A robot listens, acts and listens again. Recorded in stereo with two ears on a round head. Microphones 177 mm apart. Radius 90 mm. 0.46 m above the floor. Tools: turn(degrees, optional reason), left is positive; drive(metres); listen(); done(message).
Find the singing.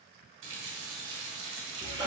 listen()
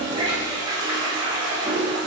listen()
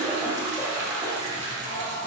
turn(degrees=50, reason="The singing: about 50° left or 130° left.")
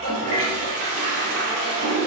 listen()
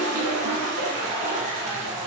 listen()
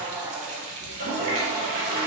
turn(degrees=-15, reason="So it is at 15° right.")
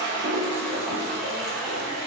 listen()
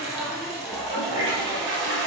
done("Found it: singing, straight ahead, 1 to 2 m away.")